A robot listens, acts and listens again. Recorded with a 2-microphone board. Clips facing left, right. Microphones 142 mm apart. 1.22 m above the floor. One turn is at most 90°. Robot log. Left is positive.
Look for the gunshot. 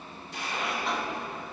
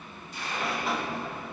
cmd yaw +90
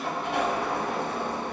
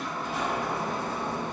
end: Facing where the gunshot came from. I can't hear it now.